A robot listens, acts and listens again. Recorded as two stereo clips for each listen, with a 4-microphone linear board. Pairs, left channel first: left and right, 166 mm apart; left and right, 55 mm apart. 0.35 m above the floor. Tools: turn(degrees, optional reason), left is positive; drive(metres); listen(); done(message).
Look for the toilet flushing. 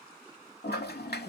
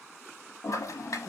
turn(degrees=90)
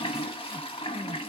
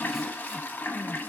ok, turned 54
turn(degrees=35, reason="So it is at 35° left.")
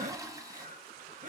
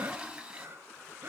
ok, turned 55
turn(degrees=-20, reason="The toilet flushing is now 20° right.")
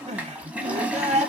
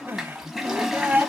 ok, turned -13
turn(degrees=-10, reason="The toilet flushing is now 10° right.")
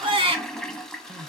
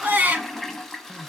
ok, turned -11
done("Facing the toilet flushing.")